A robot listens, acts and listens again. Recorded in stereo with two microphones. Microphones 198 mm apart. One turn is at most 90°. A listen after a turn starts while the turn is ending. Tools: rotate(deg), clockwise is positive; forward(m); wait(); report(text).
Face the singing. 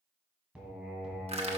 rotate(-30)
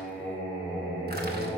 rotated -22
rotate(-90)
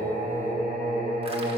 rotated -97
rotate(-50)
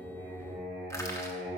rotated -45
report("Found it: singing, straight ahead, 2 to 4 m away.")